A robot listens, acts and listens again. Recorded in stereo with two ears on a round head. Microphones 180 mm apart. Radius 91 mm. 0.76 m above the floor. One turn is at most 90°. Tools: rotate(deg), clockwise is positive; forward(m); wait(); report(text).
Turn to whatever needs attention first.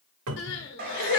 rotate(-60)
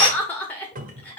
rotate(-10)
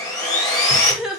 report("Found it: crying, straight ahead, under 1 m away.")